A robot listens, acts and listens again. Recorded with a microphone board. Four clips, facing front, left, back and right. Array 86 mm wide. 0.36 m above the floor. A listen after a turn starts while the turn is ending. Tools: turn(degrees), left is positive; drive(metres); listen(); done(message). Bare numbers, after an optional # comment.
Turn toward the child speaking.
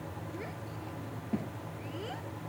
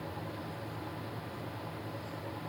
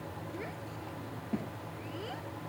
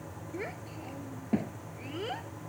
# The child speaking: 90° right.
turn(-90)
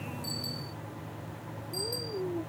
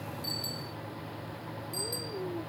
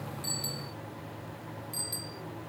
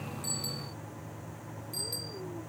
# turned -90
listen()
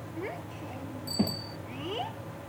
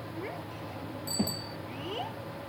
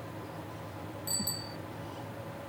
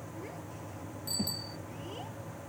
# The child speaking is now 25° left.
turn(25)
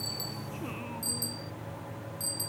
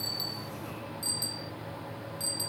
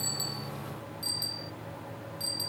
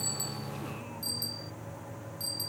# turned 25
listen()
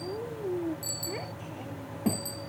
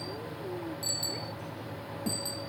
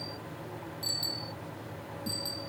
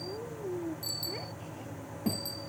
# The child speaking is now 10° right.
turn(-10)
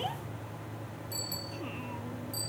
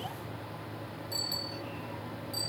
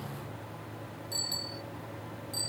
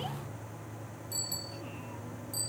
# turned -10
listen()
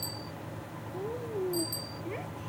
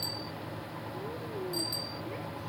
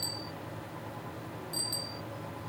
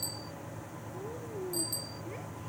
done("Facing the child speaking.")